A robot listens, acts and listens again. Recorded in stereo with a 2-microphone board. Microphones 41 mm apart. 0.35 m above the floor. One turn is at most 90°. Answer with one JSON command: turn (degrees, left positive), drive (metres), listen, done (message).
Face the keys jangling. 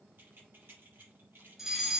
{"turn": -55}
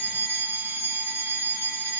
{"listen": true}
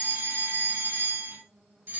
{"listen": true}
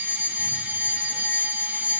{"done": "I heard keys jangling, but can't make it out now. It was about straight ahead or 70° right."}